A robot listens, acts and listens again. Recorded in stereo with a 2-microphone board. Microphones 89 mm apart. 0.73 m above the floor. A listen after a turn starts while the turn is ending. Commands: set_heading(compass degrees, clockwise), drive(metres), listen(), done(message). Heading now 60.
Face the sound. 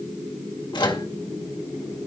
set_heading(5)
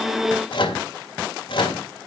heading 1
set_heading(296)
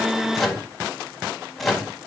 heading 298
done("Facing the microwave, 2 to 4 m away.")